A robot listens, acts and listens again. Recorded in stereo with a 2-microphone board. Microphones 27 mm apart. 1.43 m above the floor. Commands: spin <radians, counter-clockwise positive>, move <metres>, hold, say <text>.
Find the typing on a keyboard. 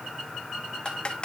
spin 0.61
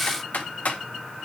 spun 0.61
spin 2.01
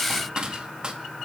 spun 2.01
spin -0.44
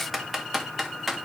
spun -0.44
say Facing the typing on a keyboard.